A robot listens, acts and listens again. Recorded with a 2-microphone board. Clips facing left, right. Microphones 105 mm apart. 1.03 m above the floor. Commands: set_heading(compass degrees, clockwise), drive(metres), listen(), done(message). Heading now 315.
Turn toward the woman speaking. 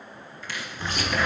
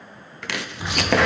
listen()
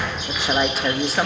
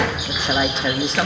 set_heading(285)
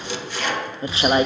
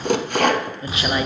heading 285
set_heading(135)
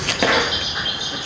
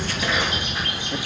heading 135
listen()
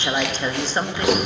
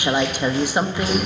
set_heading(150)
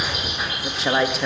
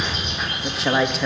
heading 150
done("Found it: a woman speaking, straight ahead.")